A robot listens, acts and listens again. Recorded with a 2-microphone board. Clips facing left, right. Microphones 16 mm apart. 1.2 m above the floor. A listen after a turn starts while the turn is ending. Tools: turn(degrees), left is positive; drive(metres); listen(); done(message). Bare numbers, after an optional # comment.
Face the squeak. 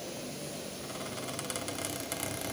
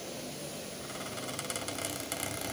turn(30)
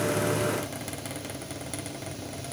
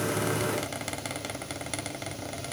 # So it is at 25° right.
turn(-25)
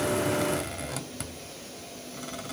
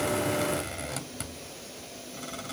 done("Found it: a squeak, straight ahead, 1 to 2 m away.")